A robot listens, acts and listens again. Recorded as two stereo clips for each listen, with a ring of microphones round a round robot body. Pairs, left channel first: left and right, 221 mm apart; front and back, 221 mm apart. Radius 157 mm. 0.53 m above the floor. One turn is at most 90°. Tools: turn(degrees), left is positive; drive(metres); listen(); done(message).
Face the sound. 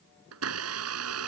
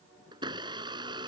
turn(degrees=-90)
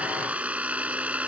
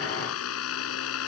done("Found it: a blender, straight ahead.")